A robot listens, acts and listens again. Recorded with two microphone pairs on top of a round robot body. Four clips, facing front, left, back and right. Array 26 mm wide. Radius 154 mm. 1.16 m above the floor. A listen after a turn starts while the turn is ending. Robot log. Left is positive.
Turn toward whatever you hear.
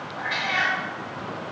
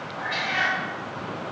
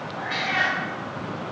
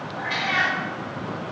note: The cat meowing: 105° right.
cmd yaw -105
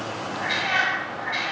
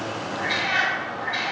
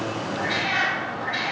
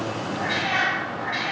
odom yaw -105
note: The cat meowing is now 50° right.
cmd yaw -50
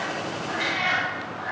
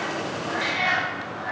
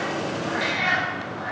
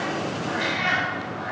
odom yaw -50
note: The cat meowing is now 25° right.
cmd yaw -25
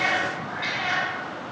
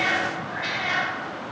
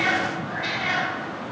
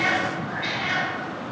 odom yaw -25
note: The cat meowing is now 10° right.
cmd yaw -10
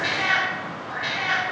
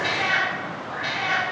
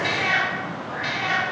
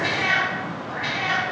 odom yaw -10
note: The cat meowing is now 10° right.
cmd yaw -10
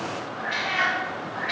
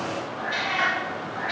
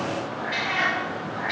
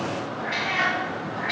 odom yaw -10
end: Facing the cat meowing, 2 to 4 m away.